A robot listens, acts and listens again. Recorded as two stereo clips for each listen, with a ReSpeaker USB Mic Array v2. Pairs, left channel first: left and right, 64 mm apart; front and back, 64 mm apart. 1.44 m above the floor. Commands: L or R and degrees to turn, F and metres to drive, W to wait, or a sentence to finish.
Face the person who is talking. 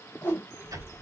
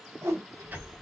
R150
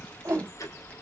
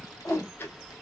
L20
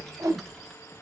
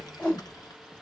Found it: a child speaking, straight ahead, 1 to 2 m away.